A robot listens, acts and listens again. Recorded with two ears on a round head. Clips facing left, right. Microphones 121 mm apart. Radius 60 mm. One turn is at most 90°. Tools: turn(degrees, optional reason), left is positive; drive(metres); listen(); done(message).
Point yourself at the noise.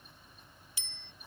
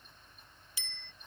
turn(degrees=-70, reason="The bicycle bell: about 70° right or 110° right.")
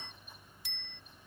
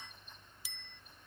done("Found it: a bicycle bell, straight ahead.")